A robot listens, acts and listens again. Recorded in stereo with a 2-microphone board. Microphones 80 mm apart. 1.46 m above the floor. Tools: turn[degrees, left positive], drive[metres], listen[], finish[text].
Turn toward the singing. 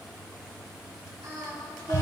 Thought: The singing: about 55° right or 125° right.
Action: turn[-55]
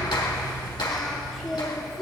Action: finish[Found it: singing, straight ahead, 2 to 4 m away.]